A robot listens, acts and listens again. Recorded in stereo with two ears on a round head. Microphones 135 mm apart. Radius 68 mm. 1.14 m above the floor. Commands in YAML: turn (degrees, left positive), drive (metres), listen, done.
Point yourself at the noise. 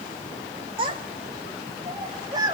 turn: -25
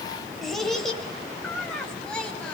done: "Facing the child speaking."